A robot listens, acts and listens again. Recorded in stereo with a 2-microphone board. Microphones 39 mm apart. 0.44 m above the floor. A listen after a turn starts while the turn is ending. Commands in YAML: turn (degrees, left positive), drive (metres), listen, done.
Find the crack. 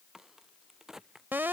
turn: -30
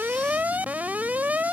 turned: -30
listen: true
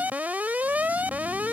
done: "I heard a crack, but can't make it out now. It was about 20° left or 140° right."